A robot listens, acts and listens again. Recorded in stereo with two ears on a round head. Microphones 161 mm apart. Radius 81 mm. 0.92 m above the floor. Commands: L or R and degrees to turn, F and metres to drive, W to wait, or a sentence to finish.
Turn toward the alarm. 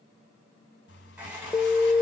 L30
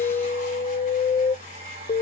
L140
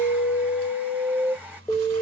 L10
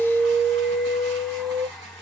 Facing the alarm, under 1 m away.